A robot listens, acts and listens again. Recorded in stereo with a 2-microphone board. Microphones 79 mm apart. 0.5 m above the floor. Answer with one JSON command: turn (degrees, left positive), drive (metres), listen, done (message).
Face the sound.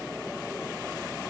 {"listen": true}
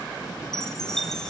{"turn": 30}
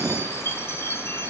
{"turn": 145}
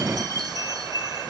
{"turn": -65}
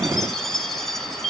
{"done": "Facing the chime."}